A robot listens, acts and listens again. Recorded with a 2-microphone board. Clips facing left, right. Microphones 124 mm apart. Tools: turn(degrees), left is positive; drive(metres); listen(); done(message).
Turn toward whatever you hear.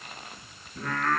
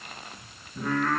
turn(degrees=-30)
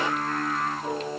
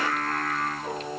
turn(degrees=10)
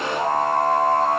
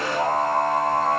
done("Found it: singing, straight ahead, 2 to 4 m away.")